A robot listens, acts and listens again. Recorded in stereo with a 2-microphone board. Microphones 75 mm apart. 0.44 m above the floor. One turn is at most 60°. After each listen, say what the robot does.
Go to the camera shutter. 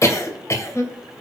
Keep listening.
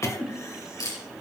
Turn 50° left.
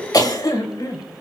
Keep listening.
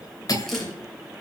Keep listening.
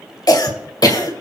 I heard a camera shutter, but can't make it out now. It was about straight ahead or 80° left. I did not reach it.